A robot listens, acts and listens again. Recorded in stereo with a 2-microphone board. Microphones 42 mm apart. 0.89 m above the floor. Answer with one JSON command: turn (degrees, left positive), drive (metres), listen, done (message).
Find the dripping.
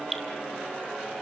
{"turn": 30}
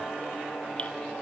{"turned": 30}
{"listen": true}
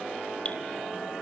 {"listen": true}
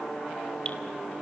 {"done": "I heard dripping, but can't make it out now. It was about 30° right or 150° left."}